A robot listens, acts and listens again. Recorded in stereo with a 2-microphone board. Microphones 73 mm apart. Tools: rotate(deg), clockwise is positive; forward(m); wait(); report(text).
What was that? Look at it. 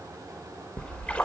rotate(-20)
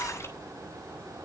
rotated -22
rotate(-140)
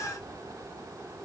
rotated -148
rotate(10)
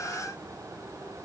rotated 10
report("Facing where the splash came from. I can't hear it now.")